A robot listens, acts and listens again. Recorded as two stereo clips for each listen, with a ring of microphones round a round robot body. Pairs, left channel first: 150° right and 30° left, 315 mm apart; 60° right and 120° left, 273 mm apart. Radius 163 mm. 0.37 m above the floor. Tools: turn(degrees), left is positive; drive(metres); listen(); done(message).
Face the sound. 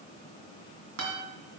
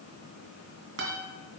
turn(degrees=75)
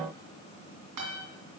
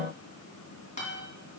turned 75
done("Facing the guitar, 2 to 4 m away.")